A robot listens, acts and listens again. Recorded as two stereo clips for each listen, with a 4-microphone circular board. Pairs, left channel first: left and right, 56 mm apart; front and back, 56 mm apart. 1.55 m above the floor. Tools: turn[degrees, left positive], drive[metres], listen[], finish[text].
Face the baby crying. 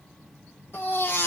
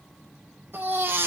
Thought: The baby crying: 130° left.
Action: turn[130]
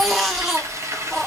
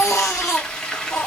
Action: finish[Facing the baby crying.]